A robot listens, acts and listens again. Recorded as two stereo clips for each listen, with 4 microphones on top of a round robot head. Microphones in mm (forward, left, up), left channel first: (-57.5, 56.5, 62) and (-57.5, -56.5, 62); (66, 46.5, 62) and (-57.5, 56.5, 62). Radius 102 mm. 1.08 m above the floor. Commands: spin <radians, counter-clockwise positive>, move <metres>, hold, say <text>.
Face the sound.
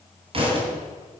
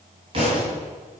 spin -2.18
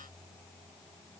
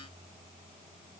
say I heard a thud from this way, but can't make it out now.